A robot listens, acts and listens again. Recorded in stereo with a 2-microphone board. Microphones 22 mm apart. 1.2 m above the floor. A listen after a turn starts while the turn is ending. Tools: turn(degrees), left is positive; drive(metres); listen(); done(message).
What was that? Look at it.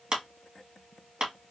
turn(degrees=-40)
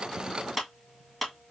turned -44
done("Found it: a clap, straight ahead, 1 to 2 m away.")